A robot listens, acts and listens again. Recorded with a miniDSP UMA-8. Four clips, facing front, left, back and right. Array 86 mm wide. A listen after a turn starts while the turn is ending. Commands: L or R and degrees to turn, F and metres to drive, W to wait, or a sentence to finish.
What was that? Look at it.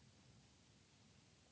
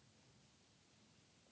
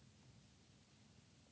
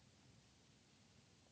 W
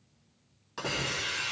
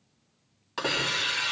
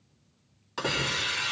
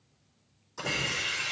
L105
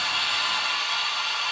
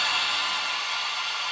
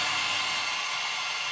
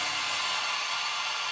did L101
Found it: a hiss, straight ahead, 2 to 4 m away.